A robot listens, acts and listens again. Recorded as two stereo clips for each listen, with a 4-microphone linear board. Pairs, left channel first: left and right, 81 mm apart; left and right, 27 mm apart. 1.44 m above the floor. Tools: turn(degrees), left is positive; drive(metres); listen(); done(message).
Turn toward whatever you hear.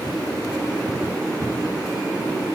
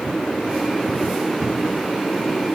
listen()
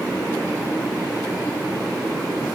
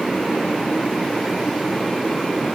listen()
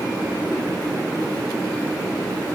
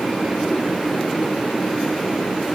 done("I can't make out anything to turn to.")